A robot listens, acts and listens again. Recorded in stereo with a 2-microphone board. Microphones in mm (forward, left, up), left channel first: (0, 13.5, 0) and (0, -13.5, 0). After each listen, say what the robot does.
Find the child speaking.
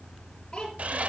Turn 30° left.
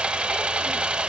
Keep listening.
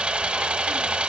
Keep listening.
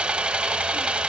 I heard a child speaking, but can't make it out now. It was about straight ahead or 120° left.